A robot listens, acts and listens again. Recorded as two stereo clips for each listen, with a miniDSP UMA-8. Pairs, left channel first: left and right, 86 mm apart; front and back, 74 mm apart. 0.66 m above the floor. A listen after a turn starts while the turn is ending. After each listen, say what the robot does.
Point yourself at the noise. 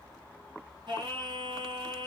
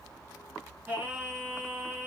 Turn 115° right.
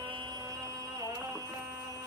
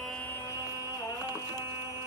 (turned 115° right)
Turn 40° right.
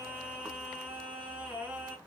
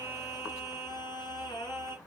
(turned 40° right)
Turn 20° right.
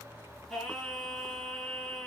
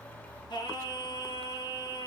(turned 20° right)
Facing the singing, 2 to 4 m away.